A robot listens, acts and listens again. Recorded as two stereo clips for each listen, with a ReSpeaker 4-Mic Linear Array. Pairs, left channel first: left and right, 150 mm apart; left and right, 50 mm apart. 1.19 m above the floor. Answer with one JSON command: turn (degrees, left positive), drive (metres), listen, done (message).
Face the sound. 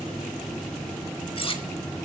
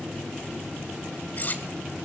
{"turn": 35}
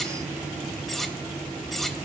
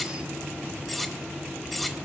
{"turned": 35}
{"done": "Found it: cutlery clinking, straight ahead."}